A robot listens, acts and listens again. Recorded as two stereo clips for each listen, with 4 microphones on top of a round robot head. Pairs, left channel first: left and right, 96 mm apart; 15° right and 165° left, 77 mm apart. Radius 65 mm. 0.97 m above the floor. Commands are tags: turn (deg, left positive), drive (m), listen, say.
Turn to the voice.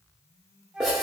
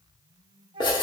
<listen/>
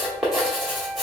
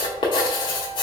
<listen/>
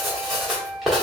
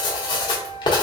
<say>I can't make out anyone speaking, only writing and a flute.</say>